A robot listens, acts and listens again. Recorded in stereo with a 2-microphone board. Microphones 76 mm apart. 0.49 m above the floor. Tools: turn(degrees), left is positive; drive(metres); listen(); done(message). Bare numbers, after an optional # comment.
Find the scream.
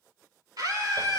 # The scream: about 65° right or 115° right.
turn(-65)
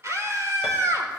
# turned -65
# So it is at 50° right.
turn(-50)
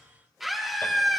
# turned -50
done("Found it: a scream, straight ahead.")